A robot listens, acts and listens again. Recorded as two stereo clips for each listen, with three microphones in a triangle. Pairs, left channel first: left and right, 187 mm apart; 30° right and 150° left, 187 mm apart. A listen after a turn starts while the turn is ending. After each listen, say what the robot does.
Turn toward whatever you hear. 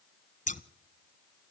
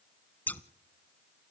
Turn 50° left.
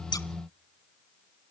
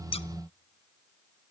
Keep listening.
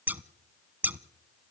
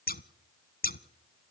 Turn 10° right.
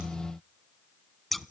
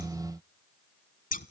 Facing the scissors.